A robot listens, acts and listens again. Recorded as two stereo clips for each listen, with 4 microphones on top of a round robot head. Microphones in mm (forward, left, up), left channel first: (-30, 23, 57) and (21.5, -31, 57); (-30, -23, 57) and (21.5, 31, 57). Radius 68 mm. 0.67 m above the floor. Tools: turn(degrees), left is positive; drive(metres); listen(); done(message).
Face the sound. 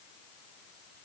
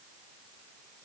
listen()
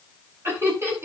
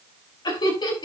turn(degrees=-105)
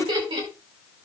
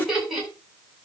turn(degrees=-40)
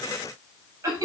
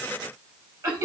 done("Found it: laughter, straight ahead, over 4 m away.")